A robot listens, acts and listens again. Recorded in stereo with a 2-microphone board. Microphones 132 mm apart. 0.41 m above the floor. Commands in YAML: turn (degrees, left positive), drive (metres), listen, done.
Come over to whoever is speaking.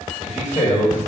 turn: 60
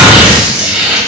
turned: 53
listen: true
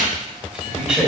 turn: 20
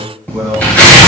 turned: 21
drive: 1.0
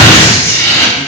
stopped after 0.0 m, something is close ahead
listen: true
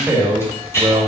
turn: -10
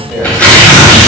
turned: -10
done: "Blocked. The man speaking is further on, straight ahead."